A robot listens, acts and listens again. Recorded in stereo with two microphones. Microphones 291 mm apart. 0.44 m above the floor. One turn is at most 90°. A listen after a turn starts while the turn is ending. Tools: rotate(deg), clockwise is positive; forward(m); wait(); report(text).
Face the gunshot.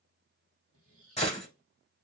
rotate(-20)
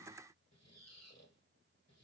wait()
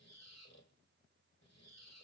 report("I heard a gunshot, but can't make it out now. It was about straight ahead or 140° left.")